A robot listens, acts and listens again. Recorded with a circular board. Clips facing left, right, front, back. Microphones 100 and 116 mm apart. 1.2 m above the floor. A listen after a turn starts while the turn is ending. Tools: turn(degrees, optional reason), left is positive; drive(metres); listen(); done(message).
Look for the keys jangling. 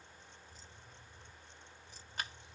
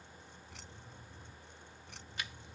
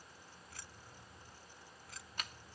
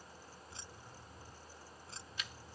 turn(degrees=-120, reason="The keys jangling: 120° right.")
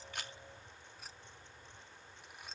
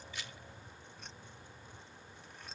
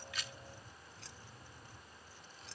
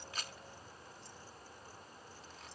done("Found it: keys jangling, straight ahead.")